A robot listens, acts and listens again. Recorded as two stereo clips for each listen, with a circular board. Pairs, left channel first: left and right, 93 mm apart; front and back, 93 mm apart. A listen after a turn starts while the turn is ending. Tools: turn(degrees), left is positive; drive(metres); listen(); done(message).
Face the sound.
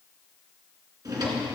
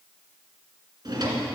turn(degrees=-135)
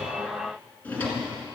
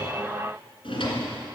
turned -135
turn(degrees=15)
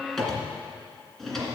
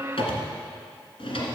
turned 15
done("Found it: a drawer, straight ahead, 2 to 4 m away.")